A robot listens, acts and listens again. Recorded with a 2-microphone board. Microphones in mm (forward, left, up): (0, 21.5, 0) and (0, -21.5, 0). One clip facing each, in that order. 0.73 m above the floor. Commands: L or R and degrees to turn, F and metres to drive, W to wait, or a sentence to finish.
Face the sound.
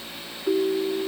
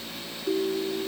L50
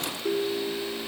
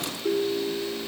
Facing the ringtone.